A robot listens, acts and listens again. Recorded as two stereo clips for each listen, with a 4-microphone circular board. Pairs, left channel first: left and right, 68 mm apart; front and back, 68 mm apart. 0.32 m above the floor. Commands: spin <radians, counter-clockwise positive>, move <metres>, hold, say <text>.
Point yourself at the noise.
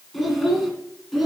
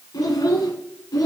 say Facing the child speaking.